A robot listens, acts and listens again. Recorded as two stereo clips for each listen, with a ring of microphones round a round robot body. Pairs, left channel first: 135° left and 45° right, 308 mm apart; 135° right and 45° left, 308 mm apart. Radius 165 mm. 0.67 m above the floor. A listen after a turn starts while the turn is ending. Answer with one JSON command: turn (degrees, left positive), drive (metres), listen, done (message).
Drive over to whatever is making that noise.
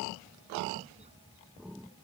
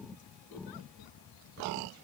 {"listen": true}
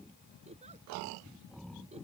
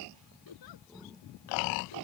{"listen": true}
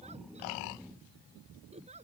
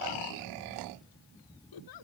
{"done": "I can't make out anything."}